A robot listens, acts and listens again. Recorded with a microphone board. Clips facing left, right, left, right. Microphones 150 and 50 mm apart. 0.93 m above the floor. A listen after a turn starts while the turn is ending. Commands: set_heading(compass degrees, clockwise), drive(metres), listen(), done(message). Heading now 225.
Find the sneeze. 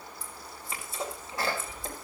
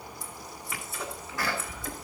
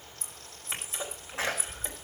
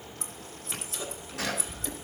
set_heading(195)
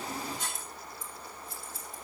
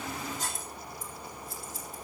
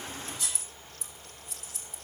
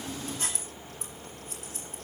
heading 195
listen()
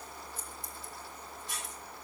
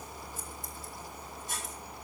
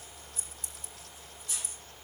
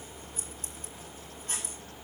done("I heard a sneeze, but can't make it out now. It was about straight ahead or 120° left.")